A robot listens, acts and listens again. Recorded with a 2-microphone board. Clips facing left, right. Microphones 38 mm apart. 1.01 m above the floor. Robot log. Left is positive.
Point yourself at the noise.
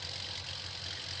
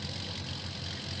cmd idle
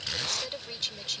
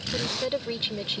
note: The woman speaking: about 30° right or 150° right.
cmd yaw -30
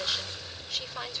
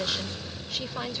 end: Facing the woman speaking.